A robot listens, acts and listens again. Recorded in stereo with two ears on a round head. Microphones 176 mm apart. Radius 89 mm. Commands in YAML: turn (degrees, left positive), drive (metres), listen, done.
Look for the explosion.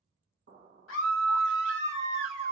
turn: -45
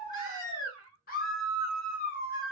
listen: true
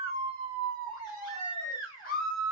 done: "I heard an explosion, but can't make it out now. It was about straight ahead or 90° right."